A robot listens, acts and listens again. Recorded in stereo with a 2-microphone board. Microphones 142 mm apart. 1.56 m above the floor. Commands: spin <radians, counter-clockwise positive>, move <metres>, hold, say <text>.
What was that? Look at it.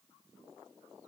hold
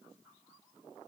hold
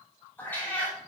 spin 0.52
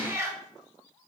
spin -0.35
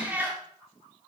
spin -0.26
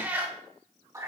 spin -0.44
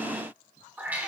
spin -0.17
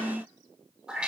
say Found it: a cat meowing, straight ahead.